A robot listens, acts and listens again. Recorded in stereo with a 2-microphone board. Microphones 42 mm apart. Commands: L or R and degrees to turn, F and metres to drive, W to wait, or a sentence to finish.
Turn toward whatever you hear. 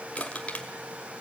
L30
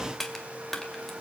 Found it: crushing, straight ahead, 2 to 4 m away.